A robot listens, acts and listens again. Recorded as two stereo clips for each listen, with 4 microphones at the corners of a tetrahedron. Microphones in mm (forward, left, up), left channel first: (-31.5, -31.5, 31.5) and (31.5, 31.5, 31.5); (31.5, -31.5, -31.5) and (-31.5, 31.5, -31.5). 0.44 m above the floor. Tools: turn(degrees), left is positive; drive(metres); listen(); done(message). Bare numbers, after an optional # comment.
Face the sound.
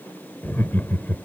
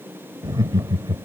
# The laughter: 160° left.
turn(160)
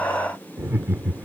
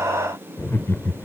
# The laughter is now 10° right.
turn(-10)
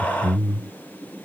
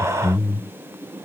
# The laughter is now 15° right.
turn(-15)
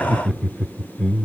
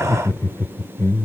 # The laughter is now 60° right.
turn(-60)
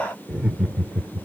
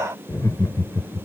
# The laughter is now 40° right.
turn(-40)
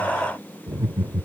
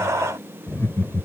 done("Facing the laughter.")